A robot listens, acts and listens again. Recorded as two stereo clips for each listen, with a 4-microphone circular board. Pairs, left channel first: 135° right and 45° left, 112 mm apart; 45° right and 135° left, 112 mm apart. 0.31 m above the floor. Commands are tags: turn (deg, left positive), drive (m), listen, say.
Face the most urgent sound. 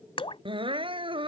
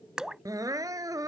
<turn deg="80"/>
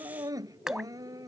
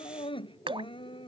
<turn deg="-10"/>
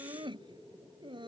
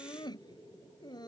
<say>Found it: crying, straight ahead.</say>